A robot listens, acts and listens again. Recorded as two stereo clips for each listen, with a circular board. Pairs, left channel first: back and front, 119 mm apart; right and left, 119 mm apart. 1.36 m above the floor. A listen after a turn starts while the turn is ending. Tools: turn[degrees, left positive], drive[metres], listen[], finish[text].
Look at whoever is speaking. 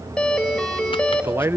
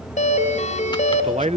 Thought: The man speaking: 70° left.
Action: turn[70]
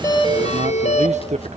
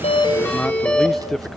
Action: finish[Found it: a man speaking, straight ahead, under 1 m away.]